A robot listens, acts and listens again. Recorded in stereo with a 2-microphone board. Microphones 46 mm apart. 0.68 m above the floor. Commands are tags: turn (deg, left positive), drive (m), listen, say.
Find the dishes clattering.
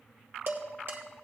<turn deg="-50"/>
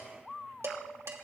<turn deg="-85"/>
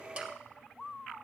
<listen/>
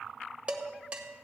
<turn deg="-25"/>
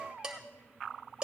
<turn deg="-20"/>
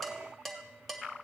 <say>Facing the dishes clattering, 1 to 2 m away.</say>